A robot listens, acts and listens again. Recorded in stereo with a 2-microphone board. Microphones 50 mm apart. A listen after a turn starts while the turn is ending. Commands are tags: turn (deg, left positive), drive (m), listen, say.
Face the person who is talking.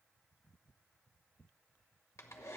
<listen/>
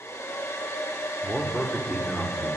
<turn deg="30"/>
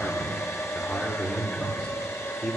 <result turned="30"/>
<turn deg="150"/>
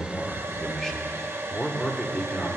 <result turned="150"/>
<turn deg="15"/>
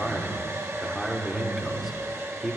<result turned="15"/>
<say>Facing the man speaking.</say>